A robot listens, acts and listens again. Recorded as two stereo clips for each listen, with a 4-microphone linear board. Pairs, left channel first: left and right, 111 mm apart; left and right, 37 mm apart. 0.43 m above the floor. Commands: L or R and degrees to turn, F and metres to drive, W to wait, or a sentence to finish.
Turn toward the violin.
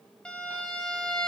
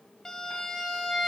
L30
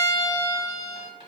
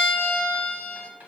L140
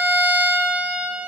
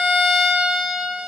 R15
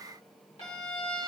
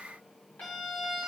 Found it: a violin, straight ahead, 1 to 2 m away.